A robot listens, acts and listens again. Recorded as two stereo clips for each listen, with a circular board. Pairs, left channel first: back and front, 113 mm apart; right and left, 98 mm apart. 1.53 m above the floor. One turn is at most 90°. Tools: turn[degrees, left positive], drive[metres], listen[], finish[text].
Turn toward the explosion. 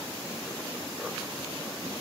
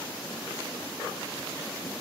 Action: listen[]
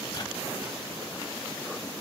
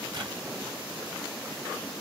Action: listen[]
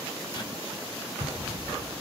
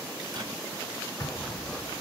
Thought: The explosion: 35° right.
Action: turn[-35]
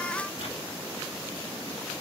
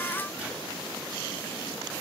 Action: finish[I heard an explosion from this way, but can't make it out now.]